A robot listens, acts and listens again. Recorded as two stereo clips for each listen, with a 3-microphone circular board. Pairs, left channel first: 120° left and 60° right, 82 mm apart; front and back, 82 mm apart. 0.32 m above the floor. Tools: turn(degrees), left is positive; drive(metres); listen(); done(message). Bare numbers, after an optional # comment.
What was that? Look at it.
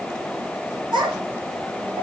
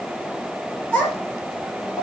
# The child speaking: 65° right.
turn(-65)
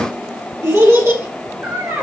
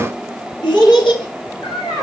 done("Facing the child speaking.")